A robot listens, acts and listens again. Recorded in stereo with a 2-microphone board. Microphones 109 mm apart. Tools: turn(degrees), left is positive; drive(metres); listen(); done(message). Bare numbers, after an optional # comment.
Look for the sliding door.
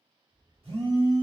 turn(30)
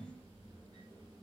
# So it is at 35° right.
turn(-35)
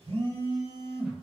listen()
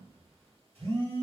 # The sliding door is now 10° right.
turn(-10)
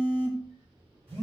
done("Facing the sliding door, 1 to 2 m away.")